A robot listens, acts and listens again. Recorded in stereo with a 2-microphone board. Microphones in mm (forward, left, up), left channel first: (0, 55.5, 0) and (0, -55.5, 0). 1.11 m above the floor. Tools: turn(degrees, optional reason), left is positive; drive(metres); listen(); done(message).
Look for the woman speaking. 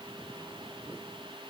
listen()
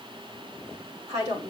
turn(degrees=-90)
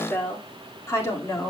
turn(degrees=30, reason="So it is at 30° left.")
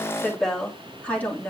turn(degrees=20, reason="The woman speaking is now 20° left.")
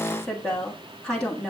turn(degrees=10, reason="The woman speaking is now 10° left.")
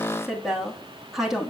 done("Found it: a woman speaking, straight ahead.")